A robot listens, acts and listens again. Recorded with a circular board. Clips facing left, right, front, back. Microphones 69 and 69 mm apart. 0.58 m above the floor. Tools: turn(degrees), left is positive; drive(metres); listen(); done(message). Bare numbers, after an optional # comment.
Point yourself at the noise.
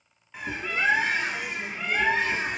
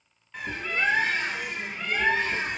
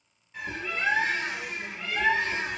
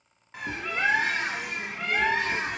# The bird: 175° left.
turn(175)
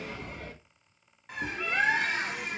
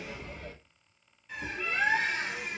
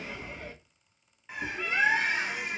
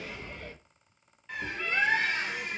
# The bird is now 75° left.
turn(75)
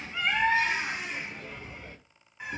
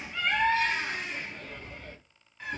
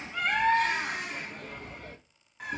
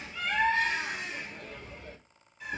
# The bird is now 15° left.
turn(15)
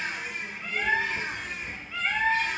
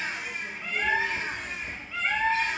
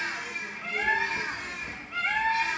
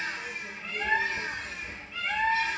done("Facing the bird, under 1 m away.")